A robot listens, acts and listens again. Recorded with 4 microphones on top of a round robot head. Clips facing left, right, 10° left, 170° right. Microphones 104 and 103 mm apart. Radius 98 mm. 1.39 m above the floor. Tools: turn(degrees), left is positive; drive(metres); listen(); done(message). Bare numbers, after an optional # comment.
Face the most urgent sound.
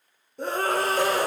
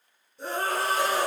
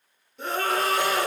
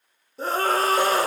# The scream: 135° left.
turn(135)
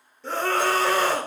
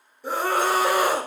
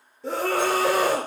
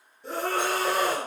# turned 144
# The scream is now 10° right.
turn(-10)
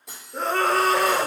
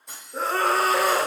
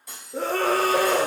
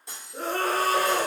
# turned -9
done("Facing the scream, under 1 m away.")